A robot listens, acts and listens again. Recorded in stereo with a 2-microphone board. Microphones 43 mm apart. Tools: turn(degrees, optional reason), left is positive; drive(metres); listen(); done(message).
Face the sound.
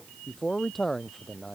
turn(degrees=30)
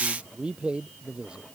turn(degrees=-25, reason="So it is at 25° right.")
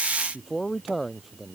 done("Facing the man speaking.")